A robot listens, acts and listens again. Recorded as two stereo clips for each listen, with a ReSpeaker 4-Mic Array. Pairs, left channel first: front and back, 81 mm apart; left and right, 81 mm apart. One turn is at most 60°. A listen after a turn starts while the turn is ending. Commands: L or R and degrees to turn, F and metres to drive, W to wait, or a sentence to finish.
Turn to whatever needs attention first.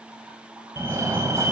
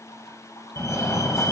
L60
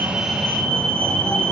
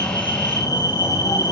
L60
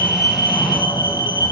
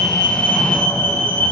L25
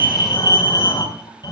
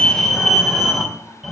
Found it: a fire alarm, straight ahead, 2 to 4 m away.